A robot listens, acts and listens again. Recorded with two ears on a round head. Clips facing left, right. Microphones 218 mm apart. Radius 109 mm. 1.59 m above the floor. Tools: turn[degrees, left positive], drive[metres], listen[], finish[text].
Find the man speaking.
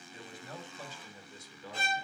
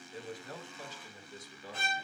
Action: turn[90]
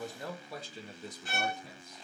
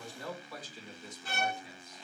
Thought: So it is at 30° left.
Action: turn[30]
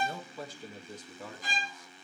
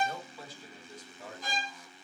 Thought: The man speaking is now 65° left.
Action: turn[65]
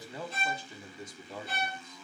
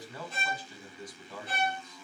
Thought: The man speaking is now 15° left.
Action: turn[15]
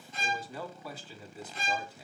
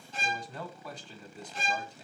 Action: finish[Found it: a man speaking, straight ahead, 1 to 2 m away.]